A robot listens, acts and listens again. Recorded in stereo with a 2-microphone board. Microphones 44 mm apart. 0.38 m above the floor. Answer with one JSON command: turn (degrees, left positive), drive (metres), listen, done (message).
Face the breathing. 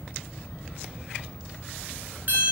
{"listen": true}
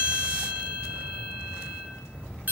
{"listen": true}
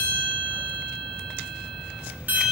{"done": "I can't make out breathing to turn to."}